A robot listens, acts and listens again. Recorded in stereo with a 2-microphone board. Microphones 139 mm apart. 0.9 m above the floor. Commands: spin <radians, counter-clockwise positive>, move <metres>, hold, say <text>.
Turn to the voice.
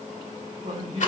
spin -0.61
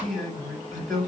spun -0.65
say Facing the man speaking.